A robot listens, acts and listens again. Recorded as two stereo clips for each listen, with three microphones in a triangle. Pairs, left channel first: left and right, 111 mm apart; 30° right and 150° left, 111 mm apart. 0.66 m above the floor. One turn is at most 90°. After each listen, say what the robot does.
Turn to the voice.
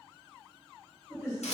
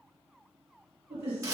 Turn 90° left.
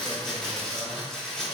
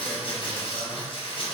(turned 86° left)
Turn 60° left.
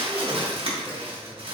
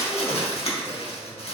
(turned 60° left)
Keep listening.
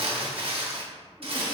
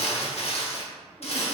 Facing where the man speaking came from. I can't hear it now.